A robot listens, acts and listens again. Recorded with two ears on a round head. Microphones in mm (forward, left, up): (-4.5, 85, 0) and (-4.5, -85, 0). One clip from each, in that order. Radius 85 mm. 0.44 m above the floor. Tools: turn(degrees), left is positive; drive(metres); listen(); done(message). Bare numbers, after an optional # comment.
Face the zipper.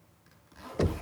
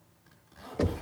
# The zipper: about 30° left or 150° left.
turn(30)
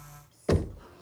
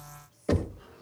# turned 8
# The zipper: about 25° left or 155° left.
turn(25)
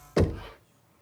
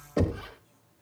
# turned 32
listen()
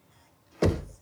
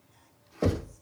# So it is at 10° right.
turn(-10)
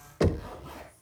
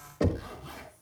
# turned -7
done("Facing the zipper, over 4 m away.")